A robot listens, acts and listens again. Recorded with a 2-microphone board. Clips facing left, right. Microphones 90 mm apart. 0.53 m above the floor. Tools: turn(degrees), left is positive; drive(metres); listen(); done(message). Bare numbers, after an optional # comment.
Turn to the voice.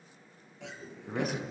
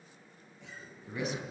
# The man speaking: about 45° left or 135° left.
turn(45)
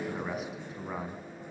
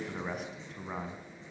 done("Facing the man speaking.")